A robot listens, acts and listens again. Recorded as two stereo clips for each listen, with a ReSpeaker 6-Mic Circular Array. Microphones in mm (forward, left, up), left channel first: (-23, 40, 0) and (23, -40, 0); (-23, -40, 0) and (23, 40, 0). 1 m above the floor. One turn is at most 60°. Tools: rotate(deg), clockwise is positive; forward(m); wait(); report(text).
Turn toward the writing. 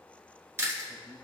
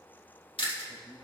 wait()
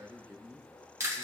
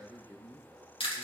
wait()
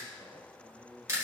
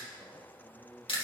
report("I can't make out writing, only a man speaking and chewing.")